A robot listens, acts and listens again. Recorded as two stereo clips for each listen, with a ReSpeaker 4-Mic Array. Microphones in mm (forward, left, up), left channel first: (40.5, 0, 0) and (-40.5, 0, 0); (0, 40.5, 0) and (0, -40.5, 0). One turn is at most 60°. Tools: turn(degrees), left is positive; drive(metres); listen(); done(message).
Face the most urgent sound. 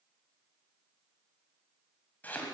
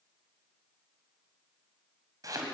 listen()
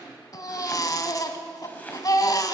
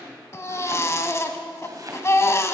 turn(degrees=40)
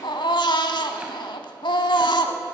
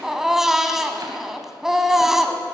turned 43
done("Found it: a baby crying, straight ahead.")